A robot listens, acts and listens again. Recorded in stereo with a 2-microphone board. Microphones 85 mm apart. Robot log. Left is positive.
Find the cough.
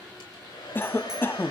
note: The cough: about 25° left or 155° left.
cmd yaw +25
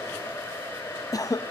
note: So it is at 125° left.
cmd yaw +125
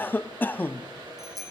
note: The cough is now 25° left.
cmd yaw +25
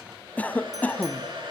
note: The cough is now 20° left.
cmd yaw +20
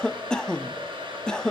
note: The cough is now 10° left.
cmd yaw +10
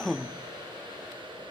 end: Facing the cough, under 1 m away.